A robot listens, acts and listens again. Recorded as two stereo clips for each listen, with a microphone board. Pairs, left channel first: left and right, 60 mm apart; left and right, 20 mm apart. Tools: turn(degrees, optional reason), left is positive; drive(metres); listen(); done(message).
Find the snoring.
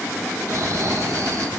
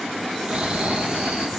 turn(degrees=-65, reason="The snoring: about 65° right or 115° right.")
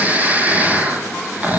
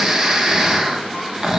turn(degrees=-30, reason="So it is at 30° right.")
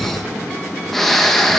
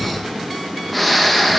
done("Found it: snoring, straight ahead.")